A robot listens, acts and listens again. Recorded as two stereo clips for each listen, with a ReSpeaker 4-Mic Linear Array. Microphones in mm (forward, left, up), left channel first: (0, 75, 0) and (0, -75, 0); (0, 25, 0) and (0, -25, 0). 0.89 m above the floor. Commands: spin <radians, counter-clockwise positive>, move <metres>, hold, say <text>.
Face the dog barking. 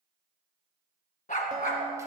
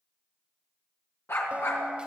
spin 1.22
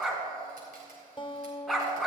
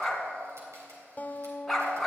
say Found it: a dog barking, straight ahead.